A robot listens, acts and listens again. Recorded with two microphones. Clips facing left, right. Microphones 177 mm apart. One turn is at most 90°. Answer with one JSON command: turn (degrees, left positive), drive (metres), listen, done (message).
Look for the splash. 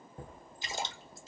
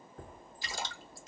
{"turn": 20}
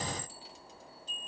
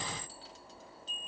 {"listen": true}
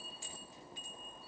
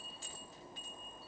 {"done": "I heard a splash, but can't make it out now. It was about straight ahead or 140° left."}